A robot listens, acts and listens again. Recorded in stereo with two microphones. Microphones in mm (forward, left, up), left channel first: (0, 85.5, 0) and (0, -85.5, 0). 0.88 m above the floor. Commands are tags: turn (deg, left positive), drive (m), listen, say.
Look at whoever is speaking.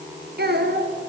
<turn deg="-65"/>
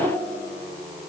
<listen/>
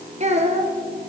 <turn deg="-40"/>
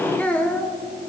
<turn deg="10"/>
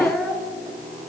<say>Found it: a child speaking, straight ahead.</say>